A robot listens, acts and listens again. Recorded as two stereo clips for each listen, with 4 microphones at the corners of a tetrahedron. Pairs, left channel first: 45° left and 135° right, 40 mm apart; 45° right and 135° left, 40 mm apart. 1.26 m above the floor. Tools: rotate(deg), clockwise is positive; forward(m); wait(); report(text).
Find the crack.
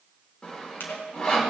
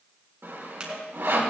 rotate(-65)
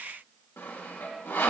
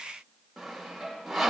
report("I heard a crack from this way, but can't make it out now.")